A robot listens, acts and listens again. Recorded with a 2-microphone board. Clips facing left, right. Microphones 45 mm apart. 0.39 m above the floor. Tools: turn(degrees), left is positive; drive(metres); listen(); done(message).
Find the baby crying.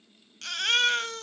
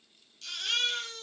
turn(degrees=65)
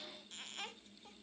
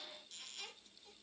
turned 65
listen()
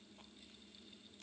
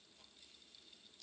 listen()
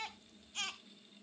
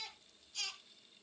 turn(degrees=40)
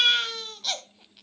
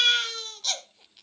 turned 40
done("Facing the baby crying.")